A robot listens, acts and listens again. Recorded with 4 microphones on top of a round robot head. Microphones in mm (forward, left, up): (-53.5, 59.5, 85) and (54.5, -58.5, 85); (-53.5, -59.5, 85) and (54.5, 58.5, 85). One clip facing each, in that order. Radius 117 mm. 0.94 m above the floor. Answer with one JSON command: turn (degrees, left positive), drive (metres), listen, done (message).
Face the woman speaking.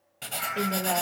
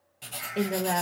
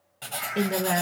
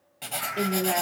{"turn": -135}
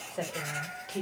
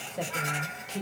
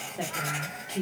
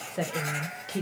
{"turn": 35}
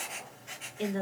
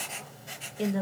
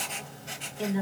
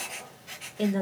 {"done": "Found it: a woman speaking, straight ahead."}